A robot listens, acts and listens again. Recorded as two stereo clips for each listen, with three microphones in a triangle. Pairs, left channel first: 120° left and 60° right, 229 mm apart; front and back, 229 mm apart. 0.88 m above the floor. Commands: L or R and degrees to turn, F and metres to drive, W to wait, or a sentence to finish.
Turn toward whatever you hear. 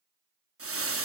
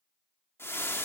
R80
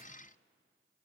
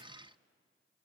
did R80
W
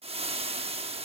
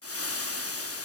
Found it: frying, straight ahead.